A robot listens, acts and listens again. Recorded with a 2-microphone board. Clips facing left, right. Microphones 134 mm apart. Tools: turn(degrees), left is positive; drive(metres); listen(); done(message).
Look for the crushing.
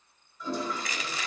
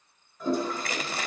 turn(degrees=-60)
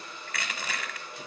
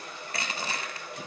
turn(degrees=-40)
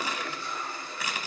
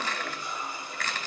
turn(degrees=15)
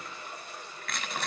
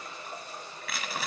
done("Found it: crushing, straight ahead.")